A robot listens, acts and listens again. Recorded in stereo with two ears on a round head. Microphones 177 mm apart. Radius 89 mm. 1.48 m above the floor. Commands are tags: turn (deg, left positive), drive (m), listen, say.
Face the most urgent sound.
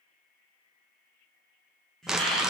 <turn deg="30"/>
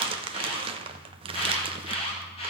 <turn deg="150"/>
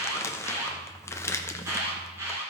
<turn deg="-15"/>
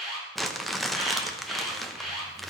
<say>Facing the alarm.</say>